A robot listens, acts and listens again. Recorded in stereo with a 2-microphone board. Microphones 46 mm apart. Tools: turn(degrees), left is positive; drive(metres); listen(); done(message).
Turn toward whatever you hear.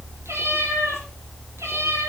turn(degrees=-90)
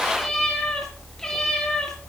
turn(degrees=10)
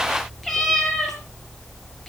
done("Found it: a cat meowing, straight ahead, over 4 m away.")